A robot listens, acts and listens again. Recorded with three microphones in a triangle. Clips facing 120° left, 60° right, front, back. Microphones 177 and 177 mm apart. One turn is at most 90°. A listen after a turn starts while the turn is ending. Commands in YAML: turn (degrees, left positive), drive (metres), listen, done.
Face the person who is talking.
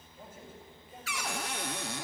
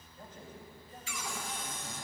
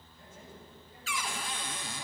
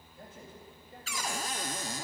turn: -90
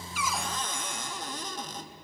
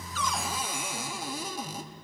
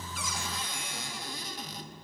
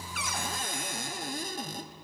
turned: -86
turn: -75
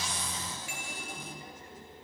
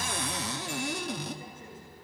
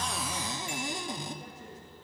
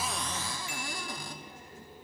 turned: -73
listen: true
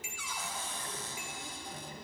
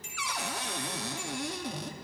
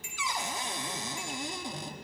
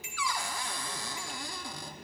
done: "I heard a man speaking from this way, but can't make it out now."